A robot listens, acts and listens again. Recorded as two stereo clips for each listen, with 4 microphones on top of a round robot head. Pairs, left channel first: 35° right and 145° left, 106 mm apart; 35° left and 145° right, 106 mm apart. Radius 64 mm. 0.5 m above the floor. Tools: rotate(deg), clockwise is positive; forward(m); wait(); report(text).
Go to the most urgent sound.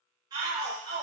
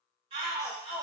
rotate(170)
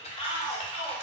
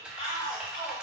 forward(1.0)
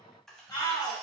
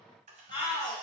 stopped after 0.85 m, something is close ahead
report("I am next to the shout.")